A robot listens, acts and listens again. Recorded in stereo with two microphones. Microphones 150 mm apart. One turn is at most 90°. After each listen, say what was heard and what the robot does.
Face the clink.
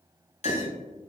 The clink: about 50° left or 130° left. Turn 50° left.
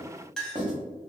Found it: a clink, straight ahead, under 1 m away.